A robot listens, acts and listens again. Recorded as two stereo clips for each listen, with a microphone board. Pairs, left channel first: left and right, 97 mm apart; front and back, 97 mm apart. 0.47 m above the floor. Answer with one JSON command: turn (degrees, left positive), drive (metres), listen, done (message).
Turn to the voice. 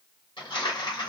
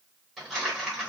{"listen": true}
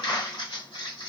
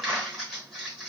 {"listen": true}
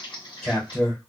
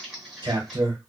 {"turn": 155}
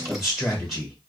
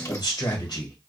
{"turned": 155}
{"done": "Facing the man speaking."}